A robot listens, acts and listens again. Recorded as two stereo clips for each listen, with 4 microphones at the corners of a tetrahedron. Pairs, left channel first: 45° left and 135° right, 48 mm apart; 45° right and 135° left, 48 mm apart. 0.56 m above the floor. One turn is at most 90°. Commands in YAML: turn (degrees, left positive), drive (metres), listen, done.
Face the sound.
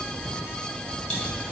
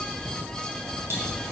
turn: 90
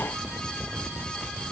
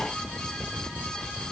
turn: 25
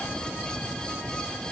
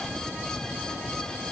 done: "I heard a pop from this way, but can't make it out now."